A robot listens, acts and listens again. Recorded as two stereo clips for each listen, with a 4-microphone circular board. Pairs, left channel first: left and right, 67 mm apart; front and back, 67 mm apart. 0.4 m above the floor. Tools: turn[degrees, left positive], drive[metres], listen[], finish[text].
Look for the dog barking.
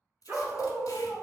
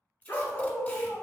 Thought: The dog barking: 60° right.
Action: turn[-60]
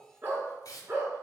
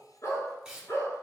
Thought: The dog barking is now 45° right.
Action: turn[-45]
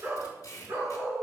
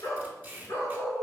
Thought: The dog barking is now 55° right.
Action: turn[-55]
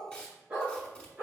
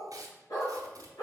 Thought: The dog barking is now 20° right.
Action: turn[-20]
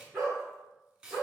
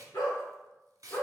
Action: finish[Facing the dog barking.]